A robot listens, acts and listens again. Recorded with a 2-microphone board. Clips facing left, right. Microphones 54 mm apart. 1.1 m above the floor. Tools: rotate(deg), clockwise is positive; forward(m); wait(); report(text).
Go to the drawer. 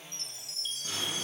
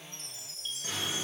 rotate(50)
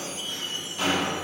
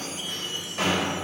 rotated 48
rotate(85)
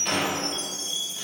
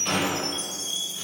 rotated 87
forward(1.0)
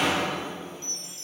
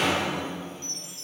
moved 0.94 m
forward(1.0)
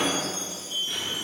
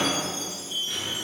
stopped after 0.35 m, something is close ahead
rotate(-10)
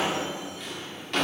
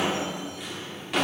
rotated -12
report("Arrived at the drawer, straight ahead.")